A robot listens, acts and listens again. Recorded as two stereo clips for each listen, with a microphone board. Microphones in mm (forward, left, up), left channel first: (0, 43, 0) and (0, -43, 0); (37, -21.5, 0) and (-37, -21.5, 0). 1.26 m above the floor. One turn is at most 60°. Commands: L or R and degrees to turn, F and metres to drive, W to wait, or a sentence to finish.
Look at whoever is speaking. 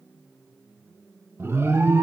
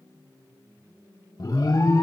W
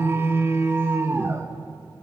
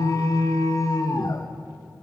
W
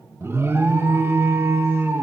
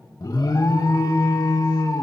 I can't make out anyone speaking to turn to.